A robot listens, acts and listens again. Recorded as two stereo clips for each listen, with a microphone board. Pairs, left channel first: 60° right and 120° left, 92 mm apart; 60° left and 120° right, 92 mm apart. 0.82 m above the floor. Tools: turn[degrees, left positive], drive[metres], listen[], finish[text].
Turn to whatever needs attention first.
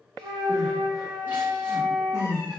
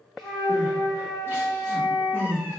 Thought: The crying: 175° right.
Action: turn[-175]
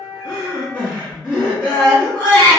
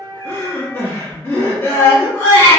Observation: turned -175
Action: finish[Facing the crying.]